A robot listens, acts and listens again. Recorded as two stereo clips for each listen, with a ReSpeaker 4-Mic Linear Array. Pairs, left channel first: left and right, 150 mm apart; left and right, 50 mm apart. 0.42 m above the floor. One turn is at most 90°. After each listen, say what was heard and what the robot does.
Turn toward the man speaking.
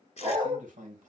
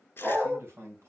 The man speaking: about 60° right or 120° right. Turn 60° right.
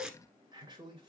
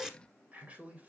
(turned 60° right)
So it is at 30° right. Turn 30° right.
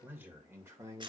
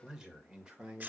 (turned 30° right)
The man speaking is now 20° right. Turn 20° right.
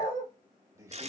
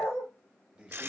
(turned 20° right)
The man speaking is now 20° right. Turn 20° right.
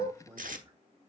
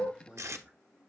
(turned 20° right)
The man speaking is now 20° right. Turn 20° right.
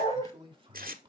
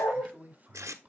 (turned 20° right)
The man speaking is now 30° right. Turn 30° right.
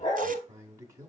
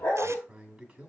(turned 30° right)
The man speaking is now 15° right. Turn 15° right.
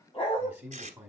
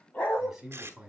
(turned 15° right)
The man speaking is now 10° right. Turn 10° right.
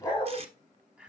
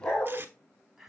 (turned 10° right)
Found it: a man speaking, straight ahead.